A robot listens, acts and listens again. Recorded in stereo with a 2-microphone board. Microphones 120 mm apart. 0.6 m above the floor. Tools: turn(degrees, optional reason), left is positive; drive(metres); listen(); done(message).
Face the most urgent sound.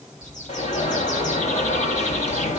turn(degrees=60, reason="The alarm: about 60° left or 120° left.")
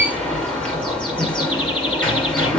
done("Found it: an alarm, straight ahead, 2 to 4 m away.")